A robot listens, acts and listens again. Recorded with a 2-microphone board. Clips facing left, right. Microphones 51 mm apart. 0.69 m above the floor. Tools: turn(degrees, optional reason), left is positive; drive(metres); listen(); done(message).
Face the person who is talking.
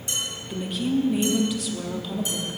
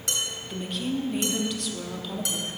turn(degrees=30)
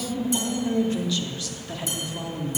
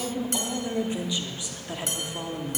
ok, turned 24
turn(degrees=-20, reason="So it is at 20° right.")
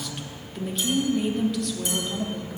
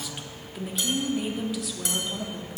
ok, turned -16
done("Found it: a woman speaking, straight ahead.")